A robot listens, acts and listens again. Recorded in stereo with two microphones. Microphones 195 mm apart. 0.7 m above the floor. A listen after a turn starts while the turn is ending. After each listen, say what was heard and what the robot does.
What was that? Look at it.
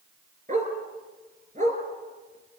The dog barking: about 45° right or 135° right. Turn 45° right.
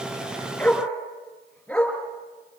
Found it: a dog barking, straight ahead.